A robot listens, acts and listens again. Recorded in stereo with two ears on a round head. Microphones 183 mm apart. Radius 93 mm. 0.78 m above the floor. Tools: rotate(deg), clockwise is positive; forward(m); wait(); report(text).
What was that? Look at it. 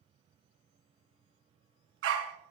rotate(70)
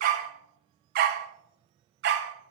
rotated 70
rotate(55)
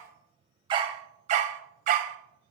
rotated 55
rotate(40)
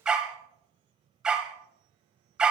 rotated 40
report("Found it: a dog barking, straight ahead, 1 to 2 m away.")